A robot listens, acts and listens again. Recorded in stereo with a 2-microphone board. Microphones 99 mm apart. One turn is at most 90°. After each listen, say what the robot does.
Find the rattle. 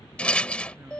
Turn 30° left.
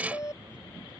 Turn 15° right.
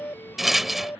Found it: a rattle, straight ahead.